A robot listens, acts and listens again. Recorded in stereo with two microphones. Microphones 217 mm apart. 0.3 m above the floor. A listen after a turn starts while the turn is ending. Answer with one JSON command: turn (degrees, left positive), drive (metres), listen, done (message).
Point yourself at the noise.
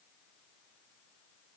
{"listen": true}
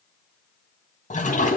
{"turn": 35}
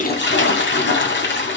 {"turn": 105}
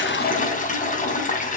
{"turn": 45}
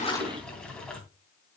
{"listen": true}
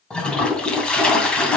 {"done": "Found it: a toilet flushing, straight ahead, 2 to 4 m away."}